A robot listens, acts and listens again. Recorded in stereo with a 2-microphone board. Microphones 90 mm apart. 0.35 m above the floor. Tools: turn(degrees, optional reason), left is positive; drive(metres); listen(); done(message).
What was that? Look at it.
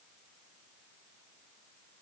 listen()
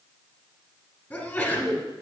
turn(degrees=25, reason="The sneeze: about 25° left or 155° left.")
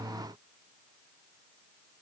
listen()
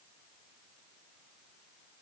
done("I heard a sneeze, but can't make it out now. It was about straight ahead or 130° left.")